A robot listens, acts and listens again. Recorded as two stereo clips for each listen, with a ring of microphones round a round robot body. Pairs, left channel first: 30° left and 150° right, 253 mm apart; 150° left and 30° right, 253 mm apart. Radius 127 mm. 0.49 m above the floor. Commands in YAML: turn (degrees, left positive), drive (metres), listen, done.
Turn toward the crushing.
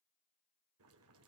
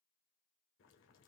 listen: true
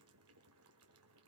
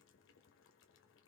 listen: true
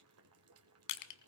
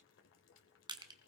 turn: 45
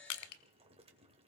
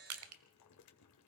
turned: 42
done: "Facing the crushing."